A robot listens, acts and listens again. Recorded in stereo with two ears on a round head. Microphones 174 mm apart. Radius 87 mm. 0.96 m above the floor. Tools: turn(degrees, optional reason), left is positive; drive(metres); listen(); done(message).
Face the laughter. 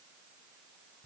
listen()
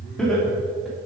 turn(degrees=30)
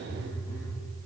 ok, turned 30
listen()
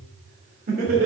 turn(degrees=-50, reason="So it is at 50° right.")
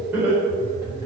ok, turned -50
turn(degrees=-10, reason="The laughter is now 10° right.")
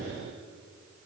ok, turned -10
listen()
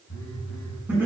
turn(degrees=-10, reason="The laughter is now 10° right.")
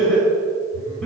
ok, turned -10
done("Found it: laughter, straight ahead.")